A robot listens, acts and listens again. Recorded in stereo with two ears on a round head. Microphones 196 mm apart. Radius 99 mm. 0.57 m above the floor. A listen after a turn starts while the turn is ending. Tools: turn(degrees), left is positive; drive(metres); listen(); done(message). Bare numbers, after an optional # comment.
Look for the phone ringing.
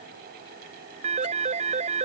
# The phone ringing: about 30° right or 150° right.
turn(-30)
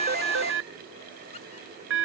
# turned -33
# So it is at 115° right.
turn(-115)
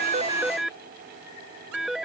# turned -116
done("Facing the phone ringing.")